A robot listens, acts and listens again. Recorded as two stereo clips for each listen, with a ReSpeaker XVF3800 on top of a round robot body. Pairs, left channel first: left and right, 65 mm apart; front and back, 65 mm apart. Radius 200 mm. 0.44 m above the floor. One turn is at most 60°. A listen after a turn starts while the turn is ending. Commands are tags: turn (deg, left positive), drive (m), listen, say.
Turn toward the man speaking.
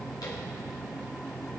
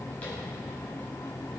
<listen/>
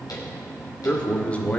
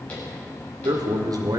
<turn deg="60"/>
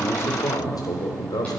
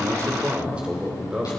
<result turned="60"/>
<turn deg="60"/>
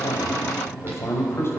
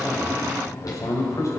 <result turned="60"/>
<turn deg="40"/>
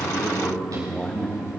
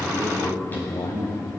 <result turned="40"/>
<turn deg="10"/>
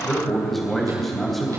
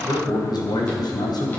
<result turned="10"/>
<say>Found it: a man speaking, straight ahead.</say>